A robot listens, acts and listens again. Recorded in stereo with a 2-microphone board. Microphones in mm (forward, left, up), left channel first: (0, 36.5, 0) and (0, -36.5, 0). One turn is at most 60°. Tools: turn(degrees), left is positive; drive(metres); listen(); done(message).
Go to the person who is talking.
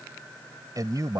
turn(degrees=-60)
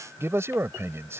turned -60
turn(degrees=-45)
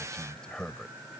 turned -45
turn(degrees=10)
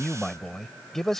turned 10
drive(metres=1.0)
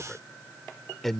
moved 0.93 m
drive(metres=1.0)
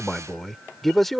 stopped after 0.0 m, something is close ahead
done("I am next to the man speaking.")